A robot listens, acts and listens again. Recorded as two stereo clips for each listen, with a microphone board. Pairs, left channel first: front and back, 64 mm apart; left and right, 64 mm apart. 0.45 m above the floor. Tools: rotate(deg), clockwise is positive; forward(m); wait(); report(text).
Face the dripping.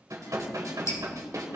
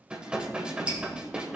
rotate(25)
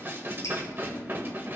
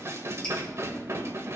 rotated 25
rotate(-10)
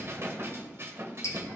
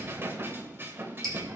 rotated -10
report("Facing the dripping, 2 to 4 m away.")